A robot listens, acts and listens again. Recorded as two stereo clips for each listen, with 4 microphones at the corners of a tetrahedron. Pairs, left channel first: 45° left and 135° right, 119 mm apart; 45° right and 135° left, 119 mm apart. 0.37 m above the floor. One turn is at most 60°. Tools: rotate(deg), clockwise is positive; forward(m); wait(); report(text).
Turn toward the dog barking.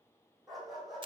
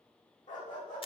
rotate(45)
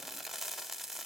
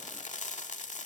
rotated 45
wait()
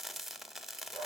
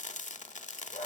wait()
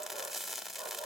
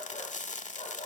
rotate(15)
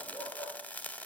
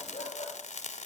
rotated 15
report("Found it: a dog barking, straight ahead.")